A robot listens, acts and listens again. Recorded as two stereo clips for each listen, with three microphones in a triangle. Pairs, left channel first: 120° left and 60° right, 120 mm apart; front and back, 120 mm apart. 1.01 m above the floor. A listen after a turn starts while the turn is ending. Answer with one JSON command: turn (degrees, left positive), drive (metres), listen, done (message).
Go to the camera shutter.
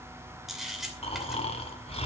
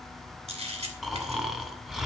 {"turn": -150}
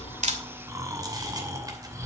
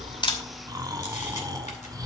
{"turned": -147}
{"listen": true}
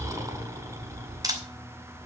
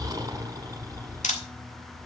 {"drive": 1.0}
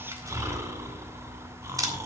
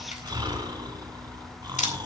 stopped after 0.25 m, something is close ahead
{"done": "Something is in my way. I am facing the camera shutter but have not reached it."}